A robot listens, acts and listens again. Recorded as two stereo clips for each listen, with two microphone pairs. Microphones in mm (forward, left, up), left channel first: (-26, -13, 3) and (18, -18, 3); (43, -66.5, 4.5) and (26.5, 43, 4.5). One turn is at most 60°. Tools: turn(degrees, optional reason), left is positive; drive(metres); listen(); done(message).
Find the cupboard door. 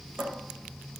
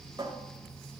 turn(degrees=45, reason="The cupboard door: 45° left.")
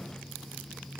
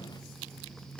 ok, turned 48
done("Found it: a cupboard door, straight ahead.")